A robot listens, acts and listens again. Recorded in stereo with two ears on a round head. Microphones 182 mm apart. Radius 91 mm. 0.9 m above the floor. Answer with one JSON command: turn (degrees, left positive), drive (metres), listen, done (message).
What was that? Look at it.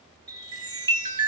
{"turn": -20}
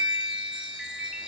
{"done": "Facing the chime."}